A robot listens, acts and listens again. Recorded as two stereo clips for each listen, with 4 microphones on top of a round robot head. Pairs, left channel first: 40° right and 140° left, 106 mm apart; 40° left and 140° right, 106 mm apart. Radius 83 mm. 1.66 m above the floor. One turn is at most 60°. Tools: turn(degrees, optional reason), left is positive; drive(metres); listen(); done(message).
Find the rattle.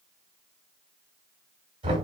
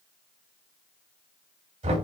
listen()
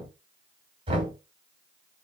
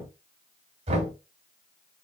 listen()
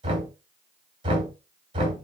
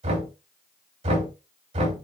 done("I can't make out a rattle to turn to.")